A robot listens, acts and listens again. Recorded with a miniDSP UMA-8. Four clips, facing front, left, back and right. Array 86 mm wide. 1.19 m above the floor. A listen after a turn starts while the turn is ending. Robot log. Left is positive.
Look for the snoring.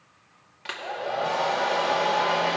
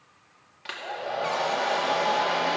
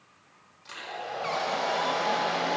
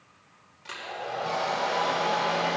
cmd idle
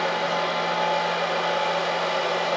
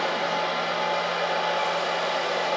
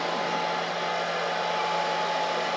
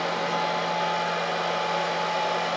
cmd idle
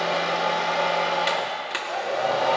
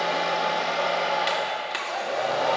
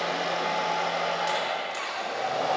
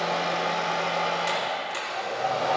end: I can't make out snoring to turn to.